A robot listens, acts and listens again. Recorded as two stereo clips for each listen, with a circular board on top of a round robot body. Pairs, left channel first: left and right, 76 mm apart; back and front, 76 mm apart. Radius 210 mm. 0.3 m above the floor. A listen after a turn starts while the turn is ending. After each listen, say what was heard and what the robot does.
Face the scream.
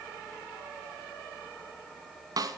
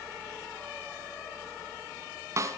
Keep listening.
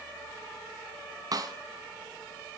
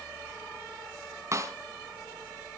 Keep listening.
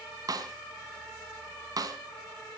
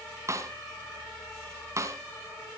I can't make out a scream to turn to.